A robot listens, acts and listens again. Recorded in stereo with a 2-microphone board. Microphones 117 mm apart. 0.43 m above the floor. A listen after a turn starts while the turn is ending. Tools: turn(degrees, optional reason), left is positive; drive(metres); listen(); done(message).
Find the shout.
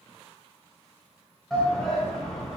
turn(degrees=30)
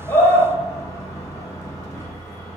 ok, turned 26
turn(degrees=150, reason="So it is at 150° left.")
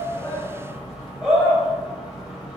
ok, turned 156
done("Facing the shout.")